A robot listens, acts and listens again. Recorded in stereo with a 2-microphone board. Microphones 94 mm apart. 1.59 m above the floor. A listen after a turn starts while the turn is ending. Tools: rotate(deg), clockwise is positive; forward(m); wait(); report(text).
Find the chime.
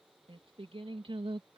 wait()
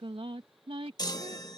rotate(-45)
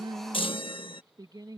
rotate(-85)
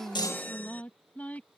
rotate(-20)
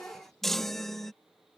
report("Facing the chime.")